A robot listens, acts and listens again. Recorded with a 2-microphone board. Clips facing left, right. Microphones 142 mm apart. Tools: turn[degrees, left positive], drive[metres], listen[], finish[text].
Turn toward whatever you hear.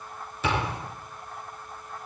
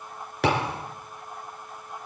Action: turn[-90]
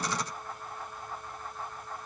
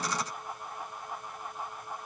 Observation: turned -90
Action: finish[I heard a thud from this way, but can't make it out now.]